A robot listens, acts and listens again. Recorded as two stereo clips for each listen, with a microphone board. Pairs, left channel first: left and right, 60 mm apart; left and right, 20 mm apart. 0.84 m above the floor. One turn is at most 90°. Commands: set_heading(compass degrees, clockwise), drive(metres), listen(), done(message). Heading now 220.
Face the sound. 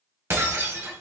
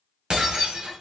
set_heading(265)
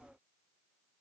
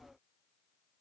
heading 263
listen()
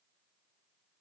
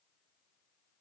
done("I heard breaking glass, but can't make it out now. It was about 5° right or 90° right.")